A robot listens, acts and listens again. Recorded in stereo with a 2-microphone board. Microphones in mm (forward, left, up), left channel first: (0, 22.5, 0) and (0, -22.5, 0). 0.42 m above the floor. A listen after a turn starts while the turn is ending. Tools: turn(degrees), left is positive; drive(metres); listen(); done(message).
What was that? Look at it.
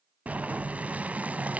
turn(degrees=-35)
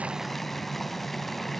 done("Facing the boiling, under 1 m away.")